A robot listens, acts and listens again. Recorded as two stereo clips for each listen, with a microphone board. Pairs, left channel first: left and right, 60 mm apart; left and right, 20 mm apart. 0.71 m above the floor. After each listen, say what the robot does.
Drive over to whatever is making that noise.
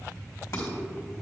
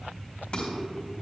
Turn 60° left.
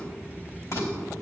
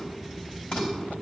Turn 55° left.
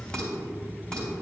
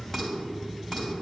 Turn 15° left.
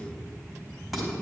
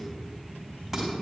Drive 1.0 m forward.
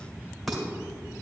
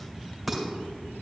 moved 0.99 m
Drive 1.0 m forward.
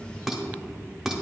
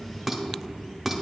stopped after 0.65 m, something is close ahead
I am next to the dishes clattering.